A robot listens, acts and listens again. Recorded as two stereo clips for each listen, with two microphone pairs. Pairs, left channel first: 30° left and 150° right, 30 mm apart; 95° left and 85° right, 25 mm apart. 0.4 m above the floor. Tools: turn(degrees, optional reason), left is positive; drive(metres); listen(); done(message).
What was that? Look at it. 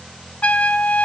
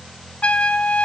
turn(degrees=70, reason="The trumpet: 70° left.")
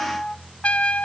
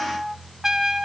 turn(degrees=-15, reason="The trumpet is now 15° right.")
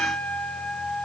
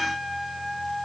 done("Found it: a trumpet, straight ahead.")